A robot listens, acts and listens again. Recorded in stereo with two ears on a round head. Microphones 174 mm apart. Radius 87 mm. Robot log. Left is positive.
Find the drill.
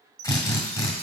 note: The drill: about 20° left or 160° left.
cmd yaw +20
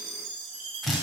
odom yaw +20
end: Facing the drill.